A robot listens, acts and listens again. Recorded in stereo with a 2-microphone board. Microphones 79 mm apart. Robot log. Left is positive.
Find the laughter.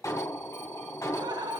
note: The laughter: about 70° right or 110° right.
cmd yaw -70
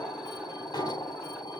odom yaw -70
cmd idle
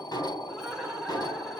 end: Facing the laughter.